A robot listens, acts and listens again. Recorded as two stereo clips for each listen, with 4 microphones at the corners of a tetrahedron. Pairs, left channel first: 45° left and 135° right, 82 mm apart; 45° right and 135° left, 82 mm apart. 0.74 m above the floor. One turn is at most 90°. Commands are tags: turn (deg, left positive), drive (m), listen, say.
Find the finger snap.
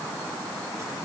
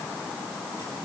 <listen/>
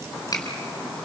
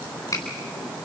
<say>Facing the finger snap, over 4 m away.</say>